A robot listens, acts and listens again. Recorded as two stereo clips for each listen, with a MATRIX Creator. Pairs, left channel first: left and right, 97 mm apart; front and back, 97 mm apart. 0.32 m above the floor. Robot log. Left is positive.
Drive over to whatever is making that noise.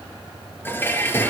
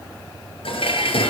note: The dishes clattering: 20° left.
cmd yaw +20
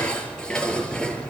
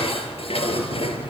note: The dishes clattering is now 10° left.
cmd yaw +10
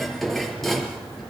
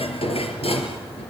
cmd fwd 1.0
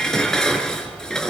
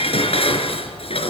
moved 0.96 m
cmd fwd 1.0
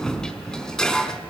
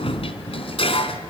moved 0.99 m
cmd fwd 1.0
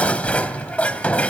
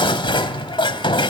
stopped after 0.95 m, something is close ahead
note: The dishes clattering is now 15° left.
cmd yaw +15
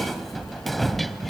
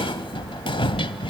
end: Arrived at the dishes clattering, straight ahead.